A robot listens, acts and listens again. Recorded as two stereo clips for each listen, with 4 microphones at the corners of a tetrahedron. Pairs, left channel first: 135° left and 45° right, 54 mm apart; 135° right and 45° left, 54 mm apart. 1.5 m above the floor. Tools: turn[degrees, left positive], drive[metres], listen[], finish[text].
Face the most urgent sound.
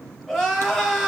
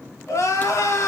Thought: The crying: 145° right.
Action: turn[-145]
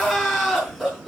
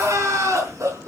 Thought: The crying is now 45° left.
Action: turn[45]
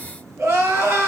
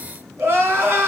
Action: finish[Found it: crying, straight ahead, over 4 m away.]